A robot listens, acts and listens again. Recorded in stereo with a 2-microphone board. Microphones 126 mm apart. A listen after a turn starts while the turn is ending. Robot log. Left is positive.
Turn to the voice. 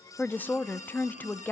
cmd yaw +30
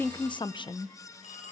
note: So it is at 135° left.
cmd yaw +135
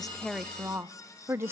note: The woman speaking is now 20° right.
cmd yaw -20
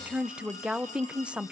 note: The woman speaking is now 10° right.
cmd yaw -10
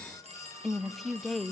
end: Found it: a woman speaking, straight ahead, under 1 m away.